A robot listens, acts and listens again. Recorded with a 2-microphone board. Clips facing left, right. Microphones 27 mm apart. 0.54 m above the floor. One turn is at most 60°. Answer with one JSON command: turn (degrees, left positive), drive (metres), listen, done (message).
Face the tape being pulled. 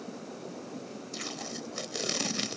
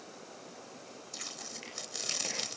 {"turn": 20}
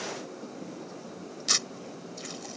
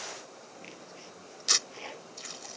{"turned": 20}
{"done": "Found it: tape being pulled, straight ahead."}